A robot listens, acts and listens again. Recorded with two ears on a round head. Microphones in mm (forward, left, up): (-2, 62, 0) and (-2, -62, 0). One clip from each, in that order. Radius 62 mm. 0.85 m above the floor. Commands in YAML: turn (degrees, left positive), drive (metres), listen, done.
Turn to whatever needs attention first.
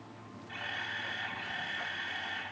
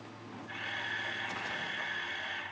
listen: true
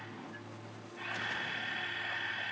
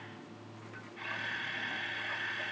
listen: true
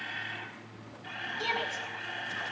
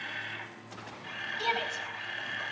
turn: -40
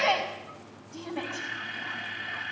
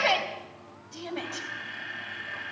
turn: -100
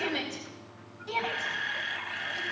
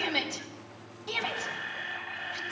turn: -25
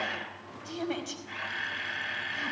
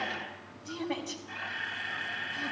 turn: 25
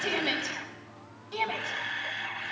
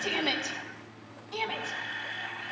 turn: 10
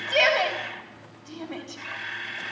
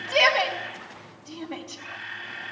done: "Facing the shout, over 4 m away."